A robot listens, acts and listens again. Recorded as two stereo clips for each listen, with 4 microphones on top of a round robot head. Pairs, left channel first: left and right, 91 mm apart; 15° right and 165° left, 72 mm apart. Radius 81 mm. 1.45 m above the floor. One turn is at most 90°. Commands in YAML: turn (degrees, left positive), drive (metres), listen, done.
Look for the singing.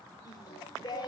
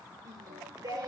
turn: 90
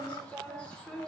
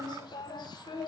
done: "Found it: singing, straight ahead."